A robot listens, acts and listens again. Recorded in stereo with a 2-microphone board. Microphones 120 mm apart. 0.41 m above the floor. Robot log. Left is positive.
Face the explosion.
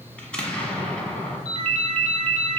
cmd yaw +30
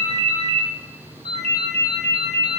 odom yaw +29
cmd idle
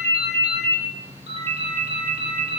end: I heard an explosion, but can't make it out now. It was about 20° right or 140° left.